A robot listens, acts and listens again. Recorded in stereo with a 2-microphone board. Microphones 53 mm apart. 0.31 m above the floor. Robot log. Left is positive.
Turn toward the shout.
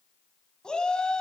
note: The shout: about 15° left or 165° left.
cmd yaw +15
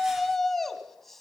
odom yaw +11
end: Facing the shout, 2 to 4 m away.